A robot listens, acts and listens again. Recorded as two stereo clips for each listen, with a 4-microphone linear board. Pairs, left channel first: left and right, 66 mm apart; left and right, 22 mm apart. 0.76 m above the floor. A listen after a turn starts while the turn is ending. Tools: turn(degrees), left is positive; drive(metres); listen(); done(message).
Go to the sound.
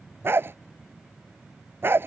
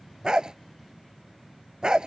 turn(degrees=-35)
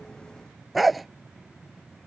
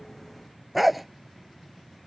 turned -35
drive(metres=1.0)
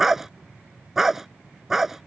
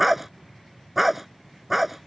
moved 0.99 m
drive(metres=1.0)
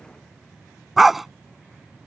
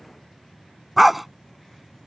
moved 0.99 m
drive(metres=1.0)
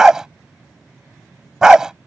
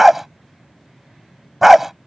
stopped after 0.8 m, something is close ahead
turn(degrees=-10)
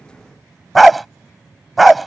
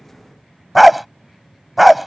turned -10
done("I am next to the dog barking.")